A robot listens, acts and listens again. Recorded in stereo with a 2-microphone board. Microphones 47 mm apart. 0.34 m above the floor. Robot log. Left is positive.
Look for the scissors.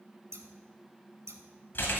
cmd yaw -90
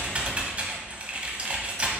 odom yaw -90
cmd idle
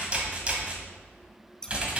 note: The scissors is now 15° left.
cmd yaw +15
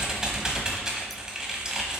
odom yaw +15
cmd idle
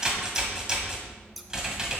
end: Found it: scissors, straight ahead, under 1 m away.